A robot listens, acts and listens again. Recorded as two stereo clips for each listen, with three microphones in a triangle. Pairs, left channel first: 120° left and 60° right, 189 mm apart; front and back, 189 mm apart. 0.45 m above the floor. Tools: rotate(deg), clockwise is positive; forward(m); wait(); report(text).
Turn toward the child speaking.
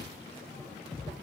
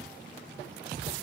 wait()
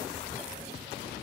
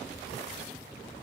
wait()
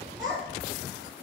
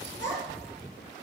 rotate(140)
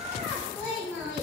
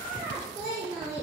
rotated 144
rotate(-40)
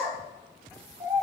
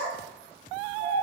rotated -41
report("Found it: a child speaking, straight ahead.")